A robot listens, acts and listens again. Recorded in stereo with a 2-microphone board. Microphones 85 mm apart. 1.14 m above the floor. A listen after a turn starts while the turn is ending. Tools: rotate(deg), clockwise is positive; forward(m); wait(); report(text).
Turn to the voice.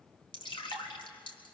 wait()
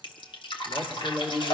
rotate(-25)
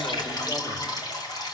wait()
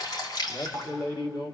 rotate(-130)
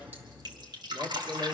rotate(-20)
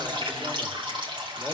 wait()
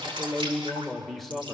report("Found it: a man speaking, straight ahead.")